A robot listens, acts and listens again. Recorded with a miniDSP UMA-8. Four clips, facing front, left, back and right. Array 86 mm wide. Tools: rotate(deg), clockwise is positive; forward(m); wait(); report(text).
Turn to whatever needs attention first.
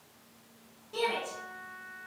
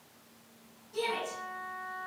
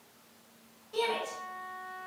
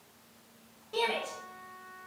rotate(85)
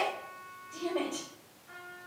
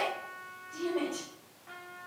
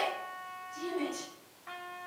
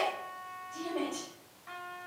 report("Facing the shout.")